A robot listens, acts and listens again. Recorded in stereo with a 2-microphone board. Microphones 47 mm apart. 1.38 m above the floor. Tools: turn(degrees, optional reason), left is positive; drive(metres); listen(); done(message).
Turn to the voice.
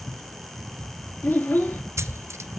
turn(degrees=40, reason="The child speaking: about 40° left or 140° left.")
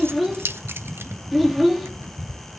done("Facing the child speaking.")